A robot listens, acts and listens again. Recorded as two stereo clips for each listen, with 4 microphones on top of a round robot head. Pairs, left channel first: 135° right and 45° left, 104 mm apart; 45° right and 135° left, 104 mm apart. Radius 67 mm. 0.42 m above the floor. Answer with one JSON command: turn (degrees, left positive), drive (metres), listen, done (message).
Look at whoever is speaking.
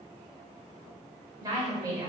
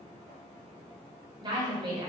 {"turn": 95}
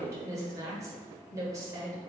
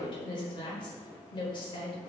{"turn": -10}
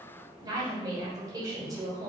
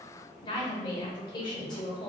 {"done": "Facing the woman speaking."}